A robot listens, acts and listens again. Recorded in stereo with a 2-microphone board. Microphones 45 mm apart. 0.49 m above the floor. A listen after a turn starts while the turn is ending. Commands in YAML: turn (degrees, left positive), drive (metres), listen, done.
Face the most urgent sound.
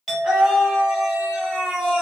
turn: -30
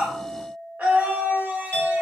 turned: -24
turn: -145
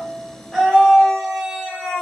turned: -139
done: "Facing the scream, 1 to 2 m away."